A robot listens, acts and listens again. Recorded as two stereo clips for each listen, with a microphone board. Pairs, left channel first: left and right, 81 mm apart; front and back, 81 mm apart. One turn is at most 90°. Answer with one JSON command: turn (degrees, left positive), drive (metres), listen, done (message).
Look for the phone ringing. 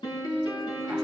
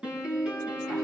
{"listen": true}
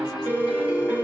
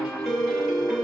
{"turn": 90}
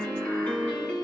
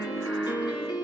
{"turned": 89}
{"turn": 60}
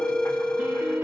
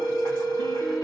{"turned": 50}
{"turn": 10}
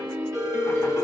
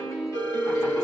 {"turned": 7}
{"done": "Facing the phone ringing."}